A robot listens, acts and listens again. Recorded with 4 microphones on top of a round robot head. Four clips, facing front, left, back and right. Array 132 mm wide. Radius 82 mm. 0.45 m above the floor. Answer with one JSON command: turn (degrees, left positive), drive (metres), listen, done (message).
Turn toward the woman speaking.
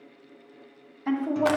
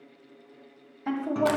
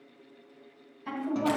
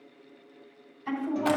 {"turn": 60}
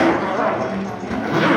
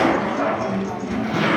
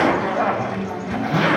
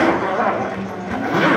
{"listen": true}
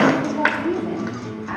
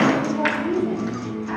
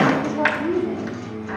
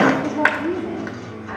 {"turn": 15}
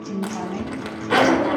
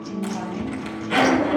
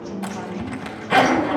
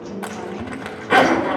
{"listen": true}
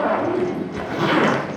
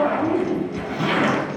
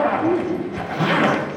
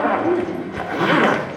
{"turn": 15}
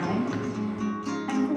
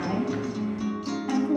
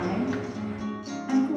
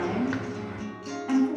{"done": "Facing the woman speaking, over 4 m away."}